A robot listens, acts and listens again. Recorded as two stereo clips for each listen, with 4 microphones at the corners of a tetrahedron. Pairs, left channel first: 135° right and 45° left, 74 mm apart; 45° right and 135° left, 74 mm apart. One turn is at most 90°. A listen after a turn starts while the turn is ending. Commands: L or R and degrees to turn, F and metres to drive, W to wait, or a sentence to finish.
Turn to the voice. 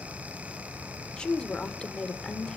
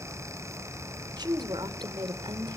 L90
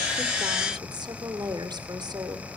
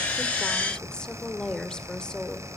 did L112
L35
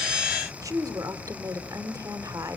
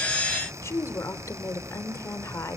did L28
Facing the woman speaking, 2 to 4 m away.